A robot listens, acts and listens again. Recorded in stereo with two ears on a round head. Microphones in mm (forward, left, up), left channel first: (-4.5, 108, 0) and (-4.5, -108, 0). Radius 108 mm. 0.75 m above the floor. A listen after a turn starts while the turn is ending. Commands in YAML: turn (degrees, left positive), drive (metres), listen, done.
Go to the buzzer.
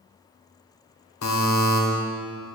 turn: 90
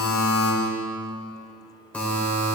drive: 1.0
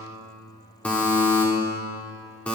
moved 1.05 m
drive: 1.0
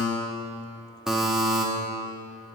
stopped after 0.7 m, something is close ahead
done: "Arrived at the buzzer, straight ahead."